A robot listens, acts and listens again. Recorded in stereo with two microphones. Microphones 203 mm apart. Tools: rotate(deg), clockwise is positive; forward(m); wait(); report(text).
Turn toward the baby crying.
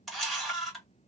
wait()
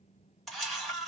wait()
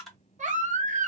rotate(40)
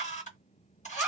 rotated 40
report("Found it: a baby crying, straight ahead.")